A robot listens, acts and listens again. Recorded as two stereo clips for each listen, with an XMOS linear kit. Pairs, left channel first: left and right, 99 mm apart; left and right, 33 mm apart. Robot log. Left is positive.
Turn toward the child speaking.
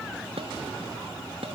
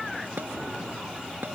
cmd idle
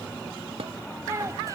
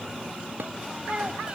note: The child speaking: about 30° right or 150° right.
cmd yaw -30
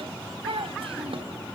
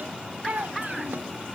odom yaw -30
note: So it is at 110° right.
cmd yaw -110
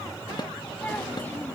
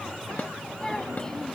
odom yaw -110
cmd idle
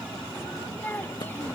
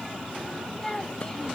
note: The child speaking is now 20° left.
cmd yaw +20
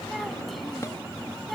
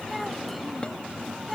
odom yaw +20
cmd idle
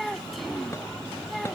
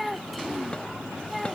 end: Found it: a child speaking, straight ahead.